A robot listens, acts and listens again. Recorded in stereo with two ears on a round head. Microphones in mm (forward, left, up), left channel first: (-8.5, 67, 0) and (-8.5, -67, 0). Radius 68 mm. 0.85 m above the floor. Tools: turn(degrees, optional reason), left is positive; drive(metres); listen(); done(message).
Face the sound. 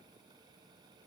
listen()
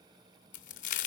turn(degrees=55, reason="The crack: about 55° left or 125° left.")
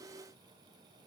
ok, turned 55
listen()
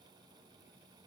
done("I heard a crack, but can't make it out now. It was about straight ahead or 70° left.")